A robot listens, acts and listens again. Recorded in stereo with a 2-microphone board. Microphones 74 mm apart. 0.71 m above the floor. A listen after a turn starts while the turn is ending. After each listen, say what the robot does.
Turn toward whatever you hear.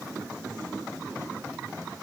Keep listening.
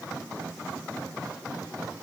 Keep listening.
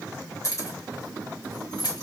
Turn 60° left.
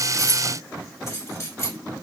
Turn 40° left.
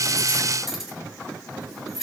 Facing the keys jangling.